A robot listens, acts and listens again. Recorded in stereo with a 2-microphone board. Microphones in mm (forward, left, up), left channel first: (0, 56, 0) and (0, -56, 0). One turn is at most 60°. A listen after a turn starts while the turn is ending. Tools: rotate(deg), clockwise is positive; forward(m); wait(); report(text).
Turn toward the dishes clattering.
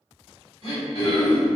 wait()
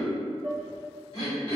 rotate(20)
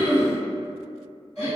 report("Found it: dishes clattering, straight ahead.")